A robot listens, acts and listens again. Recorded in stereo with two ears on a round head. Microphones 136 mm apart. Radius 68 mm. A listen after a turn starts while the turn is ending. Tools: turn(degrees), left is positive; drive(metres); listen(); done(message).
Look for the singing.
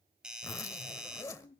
turn(degrees=70)
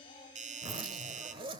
listen()
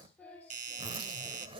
turn(degrees=10)
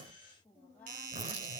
turn(degrees=10)
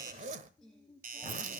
done("Found it: singing, straight ahead.")